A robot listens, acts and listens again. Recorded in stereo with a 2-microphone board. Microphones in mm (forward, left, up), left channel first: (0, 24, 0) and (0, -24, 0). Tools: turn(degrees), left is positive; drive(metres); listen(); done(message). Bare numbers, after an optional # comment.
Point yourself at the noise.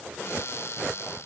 # The cupboard door: about 70° left or 110° left.
turn(70)
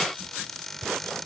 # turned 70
done("Found it: a cupboard door, straight ahead.")